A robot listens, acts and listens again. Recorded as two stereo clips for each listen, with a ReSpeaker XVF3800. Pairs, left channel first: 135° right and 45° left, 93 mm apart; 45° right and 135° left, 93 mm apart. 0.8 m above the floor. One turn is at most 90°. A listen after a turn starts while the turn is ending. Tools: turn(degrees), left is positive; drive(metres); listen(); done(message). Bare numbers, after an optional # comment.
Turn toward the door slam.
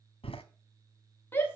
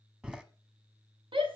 # The door slam: 145° right.
turn(-90)
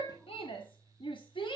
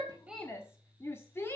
# Nothing new. It was at 55° right.
turn(-55)
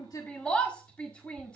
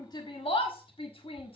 done("Facing where the door slam came from. I can't hear it now.")